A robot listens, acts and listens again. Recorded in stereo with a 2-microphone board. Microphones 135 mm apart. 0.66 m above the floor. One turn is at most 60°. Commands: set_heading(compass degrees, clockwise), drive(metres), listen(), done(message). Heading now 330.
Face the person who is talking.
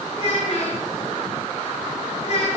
set_heading(270)
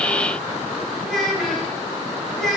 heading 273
done("Facing the child speaking, 2 to 4 m away.")